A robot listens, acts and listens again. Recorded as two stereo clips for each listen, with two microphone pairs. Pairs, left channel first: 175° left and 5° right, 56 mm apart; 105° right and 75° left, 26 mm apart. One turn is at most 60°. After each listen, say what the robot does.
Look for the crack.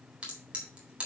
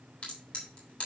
Turn 60° right.
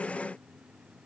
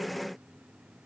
Turn 15° right.
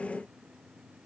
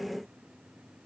Facing where the crack came from. I can't hear it now.